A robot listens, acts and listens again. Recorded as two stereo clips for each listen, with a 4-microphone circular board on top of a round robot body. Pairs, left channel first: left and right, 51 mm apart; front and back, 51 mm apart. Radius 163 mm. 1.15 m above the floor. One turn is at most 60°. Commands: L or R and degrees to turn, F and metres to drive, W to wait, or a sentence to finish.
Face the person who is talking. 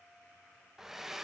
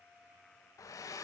W
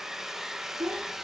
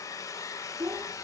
R60
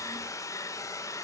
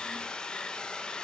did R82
R50
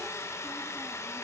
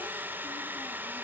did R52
W
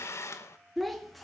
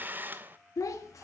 Facing the child speaking, 2 to 4 m away.